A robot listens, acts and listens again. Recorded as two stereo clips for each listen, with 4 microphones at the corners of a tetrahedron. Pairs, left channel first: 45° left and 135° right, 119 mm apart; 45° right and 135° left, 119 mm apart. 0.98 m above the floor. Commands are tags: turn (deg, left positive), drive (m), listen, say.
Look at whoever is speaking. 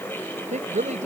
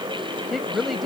<turn deg="-135"/>
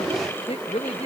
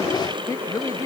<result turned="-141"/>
<turn deg="20"/>
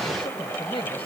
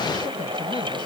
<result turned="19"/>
<listen/>
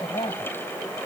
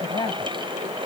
<say>Facing the woman speaking.</say>